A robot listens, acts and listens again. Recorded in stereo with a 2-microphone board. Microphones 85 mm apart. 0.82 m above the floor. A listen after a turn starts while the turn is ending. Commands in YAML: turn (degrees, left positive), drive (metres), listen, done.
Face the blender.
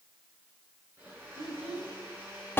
turn: -25
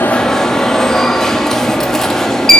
listen: true
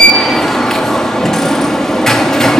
listen: true
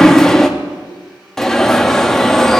done: "Found it: a blender, straight ahead, over 4 m away."